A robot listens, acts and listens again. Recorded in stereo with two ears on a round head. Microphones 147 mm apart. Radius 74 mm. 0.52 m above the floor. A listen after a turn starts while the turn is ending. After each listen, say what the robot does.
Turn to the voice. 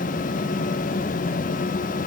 Keep listening.
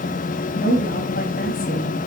Turn 55° left.
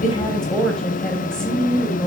Facing the woman speaking.